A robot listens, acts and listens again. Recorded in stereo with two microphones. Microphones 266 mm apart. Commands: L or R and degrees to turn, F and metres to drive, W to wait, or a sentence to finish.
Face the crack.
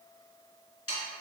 W
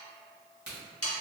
R40
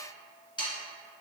W
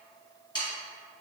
I heard a crack, but can't make it out now. It was about straight ahead or 100° right.